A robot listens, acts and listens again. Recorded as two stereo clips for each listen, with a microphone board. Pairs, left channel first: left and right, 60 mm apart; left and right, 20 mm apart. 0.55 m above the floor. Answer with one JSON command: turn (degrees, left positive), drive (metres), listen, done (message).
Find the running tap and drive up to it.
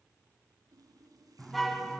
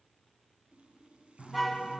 {"turn": -90}
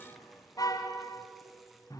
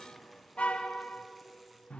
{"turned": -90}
{"listen": true}
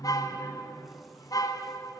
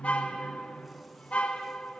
{"listen": true}
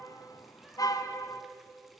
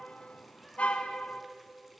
{"done": "I heard a running tap from this way, but can't make it out now. I did not reach it."}